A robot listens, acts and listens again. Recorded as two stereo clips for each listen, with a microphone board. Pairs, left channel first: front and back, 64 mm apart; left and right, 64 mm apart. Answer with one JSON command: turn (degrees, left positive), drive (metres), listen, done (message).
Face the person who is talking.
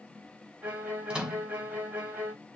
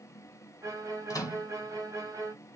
{"listen": true}
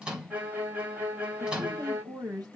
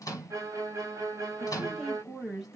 {"turn": -175}
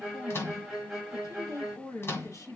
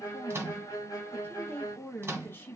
{"turn": 30}
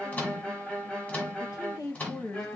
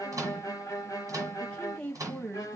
{"turn": 15}
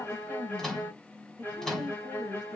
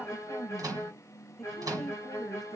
{"done": "Facing the woman speaking."}